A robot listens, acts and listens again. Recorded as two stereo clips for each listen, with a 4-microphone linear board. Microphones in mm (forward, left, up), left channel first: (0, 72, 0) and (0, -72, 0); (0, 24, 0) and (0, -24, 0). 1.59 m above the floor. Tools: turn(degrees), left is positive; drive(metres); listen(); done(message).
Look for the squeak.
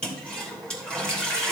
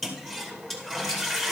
listen()
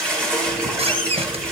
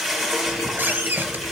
turn(degrees=-40)
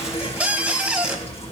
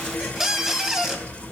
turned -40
turn(degrees=-10)
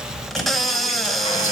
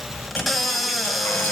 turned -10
done("Found it: a squeak, straight ahead, 1 to 2 m away.")